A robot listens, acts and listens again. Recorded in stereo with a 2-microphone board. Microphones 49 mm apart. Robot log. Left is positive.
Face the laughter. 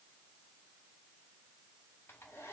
cmd idle
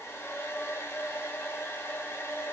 cmd idle
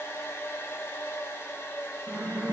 note: The laughter: about 50° right or 130° right.
cmd yaw -50
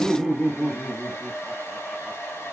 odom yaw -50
end: Found it: laughter, straight ahead, 1 to 2 m away.